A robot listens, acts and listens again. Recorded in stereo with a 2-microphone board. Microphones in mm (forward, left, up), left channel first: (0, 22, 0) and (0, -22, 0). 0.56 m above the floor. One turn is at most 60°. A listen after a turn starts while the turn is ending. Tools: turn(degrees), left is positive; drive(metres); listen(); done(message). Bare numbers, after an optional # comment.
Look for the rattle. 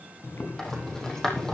turn(30)
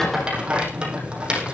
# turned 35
# So it is at 20° right.
turn(-20)
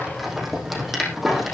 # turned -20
done("Facing the rattle, over 4 m away.")